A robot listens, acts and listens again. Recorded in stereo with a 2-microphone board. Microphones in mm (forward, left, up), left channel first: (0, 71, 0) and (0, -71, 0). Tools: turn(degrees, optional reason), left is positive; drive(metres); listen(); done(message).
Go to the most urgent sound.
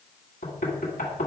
listen()
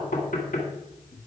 listen()
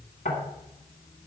done("I can't make out anything urgent, only knocking.")